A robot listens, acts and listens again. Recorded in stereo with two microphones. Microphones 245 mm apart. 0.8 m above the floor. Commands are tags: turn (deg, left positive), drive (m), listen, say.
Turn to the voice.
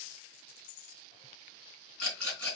<listen/>
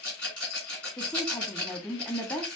<turn deg="20"/>
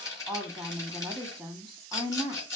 <say>Facing the woman speaking, 1 to 2 m away.</say>